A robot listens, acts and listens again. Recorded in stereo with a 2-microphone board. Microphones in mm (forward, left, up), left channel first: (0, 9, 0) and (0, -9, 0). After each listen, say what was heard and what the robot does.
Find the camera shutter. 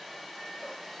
Keep listening.
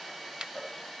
The camera shutter: about 60° right or 120° right. Turn 60° right.
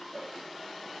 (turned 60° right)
Keep listening.
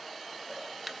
Keep listening.
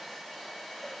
I heard a camera shutter, but can't make it out now. It was about straight ahead or 60° right.